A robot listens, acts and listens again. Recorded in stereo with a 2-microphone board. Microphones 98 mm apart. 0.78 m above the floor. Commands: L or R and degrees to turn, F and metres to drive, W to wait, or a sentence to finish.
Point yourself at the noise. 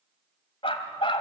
L60
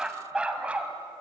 R15
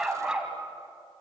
R10
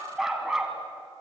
Facing the dog barking, 2 to 4 m away.